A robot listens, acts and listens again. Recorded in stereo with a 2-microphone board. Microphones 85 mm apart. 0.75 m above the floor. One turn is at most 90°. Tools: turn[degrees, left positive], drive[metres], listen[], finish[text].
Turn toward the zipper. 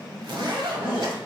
Thought: The zipper: about 65° right or 115° right.
Action: turn[-65]
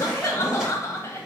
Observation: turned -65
Thought: So it is at 10° right.
Action: turn[-10]
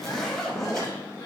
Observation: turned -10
Action: finish[Facing the zipper.]